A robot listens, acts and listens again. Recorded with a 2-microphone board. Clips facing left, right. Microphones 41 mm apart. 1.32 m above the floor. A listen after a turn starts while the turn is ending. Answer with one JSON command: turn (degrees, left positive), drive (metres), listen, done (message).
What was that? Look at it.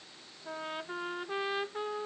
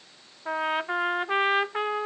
{"turn": -90}
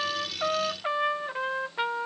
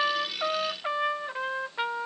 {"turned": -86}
{"done": "Found it: a trumpet, straight ahead."}